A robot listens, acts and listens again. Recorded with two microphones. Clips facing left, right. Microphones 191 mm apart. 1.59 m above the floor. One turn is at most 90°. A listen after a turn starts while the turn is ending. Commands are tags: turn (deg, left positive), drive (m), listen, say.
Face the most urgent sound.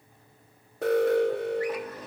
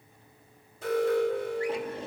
<turn deg="65"/>
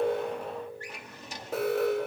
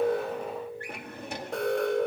<say>Found it: an alarm, straight ahead.</say>